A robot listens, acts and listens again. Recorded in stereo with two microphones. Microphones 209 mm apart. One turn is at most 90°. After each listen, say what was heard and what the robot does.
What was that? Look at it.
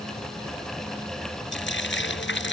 The frying: about 65° left or 115° left. Turn 65° left.
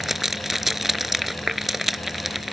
Found it: frying, straight ahead.